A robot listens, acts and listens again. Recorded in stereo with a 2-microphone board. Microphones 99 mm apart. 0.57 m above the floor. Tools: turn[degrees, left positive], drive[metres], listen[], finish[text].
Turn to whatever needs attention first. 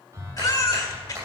Thought: The baby crying: about 35° left or 145° left.
Action: turn[35]
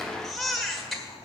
Action: finish[Found it: a baby crying, straight ahead.]